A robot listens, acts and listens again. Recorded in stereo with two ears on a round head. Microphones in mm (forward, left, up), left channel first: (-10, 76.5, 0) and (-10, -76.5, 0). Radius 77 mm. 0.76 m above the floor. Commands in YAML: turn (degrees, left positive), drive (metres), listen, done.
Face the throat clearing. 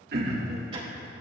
turn: -60
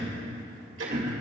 turn: -50
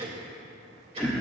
done: "Facing the throat clearing."